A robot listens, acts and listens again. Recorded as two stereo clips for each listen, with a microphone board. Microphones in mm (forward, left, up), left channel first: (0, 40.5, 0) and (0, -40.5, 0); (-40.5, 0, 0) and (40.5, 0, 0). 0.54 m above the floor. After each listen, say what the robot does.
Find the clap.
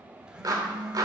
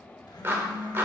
Turn 60° right.
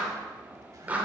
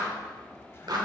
Turn 20° right.
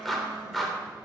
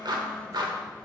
Facing the clap, 1 to 2 m away.